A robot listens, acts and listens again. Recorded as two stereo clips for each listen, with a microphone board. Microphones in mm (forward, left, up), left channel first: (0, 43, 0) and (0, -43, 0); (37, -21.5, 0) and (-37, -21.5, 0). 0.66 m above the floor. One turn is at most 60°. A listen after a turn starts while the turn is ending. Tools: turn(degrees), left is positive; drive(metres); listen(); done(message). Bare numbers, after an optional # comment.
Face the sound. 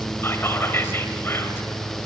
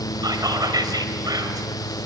# The whispering: 150° left.
turn(60)
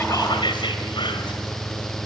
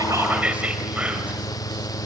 # The whispering is now 110° left.
turn(60)
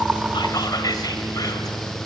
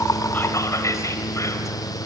# The whispering is now 45° left.
turn(45)
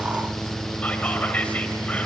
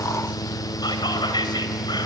# The whispering is now 15° left.
turn(15)
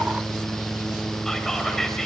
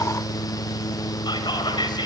done("Found it: whispering, straight ahead.")